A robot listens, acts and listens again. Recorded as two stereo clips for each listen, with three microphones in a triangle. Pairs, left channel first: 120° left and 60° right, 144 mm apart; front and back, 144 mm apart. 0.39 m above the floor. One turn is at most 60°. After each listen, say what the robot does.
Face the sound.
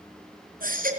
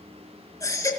Turn 60° right.
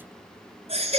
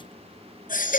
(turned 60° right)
Turn 15° right.
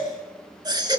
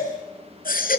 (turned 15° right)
Facing the baby crying, 2 to 4 m away.